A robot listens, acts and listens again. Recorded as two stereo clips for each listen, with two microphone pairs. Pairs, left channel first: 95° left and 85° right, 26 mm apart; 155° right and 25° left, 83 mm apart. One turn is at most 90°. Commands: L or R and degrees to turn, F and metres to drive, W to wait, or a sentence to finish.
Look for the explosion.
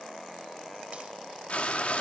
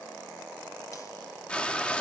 W
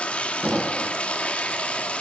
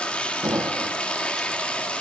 R30
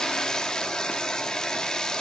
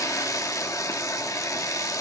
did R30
Facing where the explosion came from. I can't hear it now.